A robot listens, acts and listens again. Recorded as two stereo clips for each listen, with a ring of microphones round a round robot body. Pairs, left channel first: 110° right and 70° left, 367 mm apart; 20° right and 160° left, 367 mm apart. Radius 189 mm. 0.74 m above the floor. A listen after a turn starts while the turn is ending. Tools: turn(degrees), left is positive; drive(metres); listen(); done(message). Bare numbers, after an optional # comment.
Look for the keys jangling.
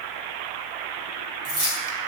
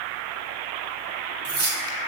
# The keys jangling: 105° left.
turn(105)
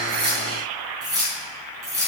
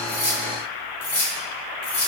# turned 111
# The keys jangling is now 15° right.
turn(-15)
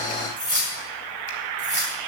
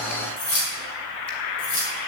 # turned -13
done("Found it: keys jangling, straight ahead, over 4 m away.")